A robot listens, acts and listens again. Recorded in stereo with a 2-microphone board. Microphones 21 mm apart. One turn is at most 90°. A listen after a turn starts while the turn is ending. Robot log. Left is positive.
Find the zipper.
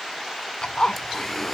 note: The zipper: about 55° left or 125° left.
cmd yaw +55
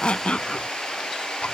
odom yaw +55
cmd idle
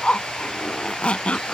note: So it is at 70° left.
cmd yaw +70
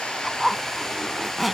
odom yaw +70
note: The zipper is now 15° right.
cmd yaw -15
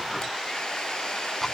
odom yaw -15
cmd idle
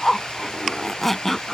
end: Found it: a zipper, straight ahead.